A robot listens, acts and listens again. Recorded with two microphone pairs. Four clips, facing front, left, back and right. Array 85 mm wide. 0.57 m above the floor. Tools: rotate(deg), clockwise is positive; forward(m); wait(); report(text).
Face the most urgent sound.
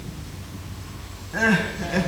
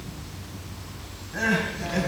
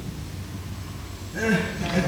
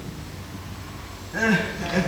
report("Facing the crying, 2 to 4 m away.")